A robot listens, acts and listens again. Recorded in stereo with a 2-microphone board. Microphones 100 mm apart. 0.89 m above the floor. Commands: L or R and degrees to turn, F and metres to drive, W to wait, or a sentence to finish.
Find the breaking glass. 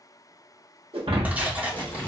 R70
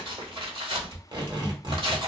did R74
W
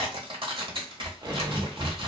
I heard breaking glass, but can't make it out now. It was about 5° left or 35° right.